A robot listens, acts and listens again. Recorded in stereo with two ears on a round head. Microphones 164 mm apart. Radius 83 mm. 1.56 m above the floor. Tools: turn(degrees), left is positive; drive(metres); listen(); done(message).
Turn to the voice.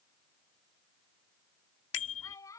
turn(degrees=15)
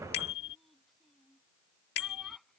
done("Facing the child speaking.")